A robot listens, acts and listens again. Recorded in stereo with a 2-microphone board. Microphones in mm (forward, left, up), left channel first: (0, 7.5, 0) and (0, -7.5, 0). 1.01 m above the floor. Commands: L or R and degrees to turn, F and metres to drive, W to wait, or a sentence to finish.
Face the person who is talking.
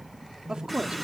R90
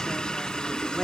W
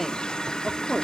L15
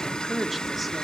Found it: a woman speaking, straight ahead.